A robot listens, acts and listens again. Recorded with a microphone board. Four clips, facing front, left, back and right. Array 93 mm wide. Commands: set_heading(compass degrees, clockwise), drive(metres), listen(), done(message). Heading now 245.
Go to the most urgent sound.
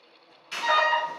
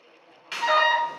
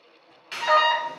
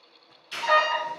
set_heading(85)
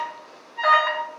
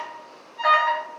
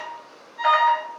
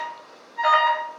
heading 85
set_heading(95)
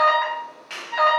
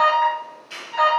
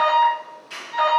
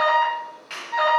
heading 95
drive(1.0)
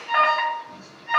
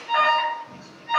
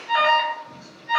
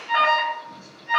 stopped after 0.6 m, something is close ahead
done("I am next to the alarm.")